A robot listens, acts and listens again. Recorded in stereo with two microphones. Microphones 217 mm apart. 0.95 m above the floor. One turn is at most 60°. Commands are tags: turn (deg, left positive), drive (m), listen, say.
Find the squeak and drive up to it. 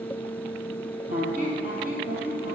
<turn deg="-40"/>
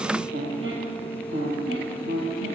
<turn deg="-60"/>
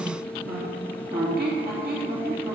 <turn deg="-50"/>
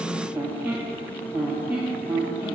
<turn deg="-10"/>
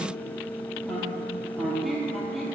<drive m="1.0"/>
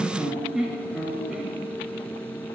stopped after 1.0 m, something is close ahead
<say>Arrived at the squeak, straight ahead.</say>